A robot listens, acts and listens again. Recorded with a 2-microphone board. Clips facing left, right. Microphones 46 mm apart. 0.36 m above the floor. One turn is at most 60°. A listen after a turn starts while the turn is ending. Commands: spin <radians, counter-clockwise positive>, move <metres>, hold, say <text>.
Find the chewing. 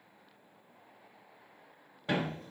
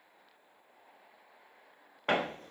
hold
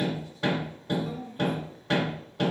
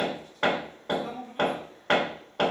hold
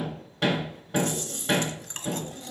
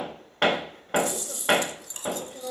spin 0.79
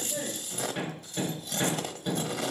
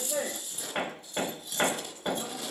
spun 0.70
spin 1.05
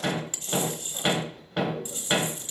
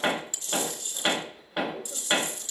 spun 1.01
spin 0.52
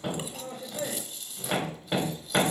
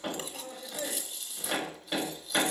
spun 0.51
say Facing the chewing, under 1 m away.